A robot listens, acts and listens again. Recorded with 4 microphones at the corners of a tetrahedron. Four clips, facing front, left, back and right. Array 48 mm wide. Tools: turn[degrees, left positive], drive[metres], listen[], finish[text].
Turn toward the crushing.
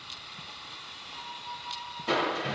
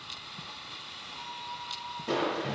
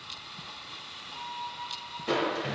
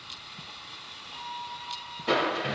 Thought: The crushing: 95° right.
Action: turn[-95]
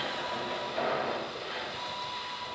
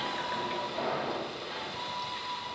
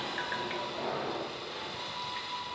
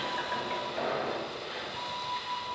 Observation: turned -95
Thought: The crushing is now 20° right.
Action: turn[-20]
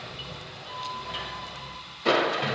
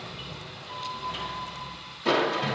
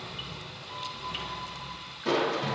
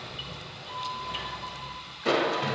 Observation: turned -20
Action: finish[Facing the crushing, 1 to 2 m away.]